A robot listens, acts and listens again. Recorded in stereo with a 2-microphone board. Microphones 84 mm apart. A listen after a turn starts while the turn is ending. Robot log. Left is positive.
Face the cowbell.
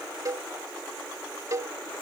note: The cowbell: about 40° right or 140° right.
cmd yaw -40
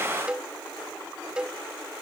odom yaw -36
note: So it is at 10° right.
cmd yaw -10
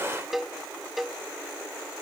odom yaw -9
end: Found it: a cowbell, straight ahead.